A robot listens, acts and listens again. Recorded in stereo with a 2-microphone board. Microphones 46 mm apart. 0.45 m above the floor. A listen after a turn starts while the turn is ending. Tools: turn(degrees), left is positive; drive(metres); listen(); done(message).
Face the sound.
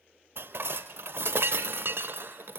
turn(degrees=-60)
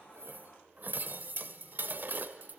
turn(degrees=-50)
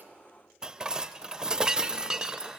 turn(degrees=-20)
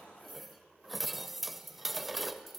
done("Facing the dishes clattering, under 1 m away.")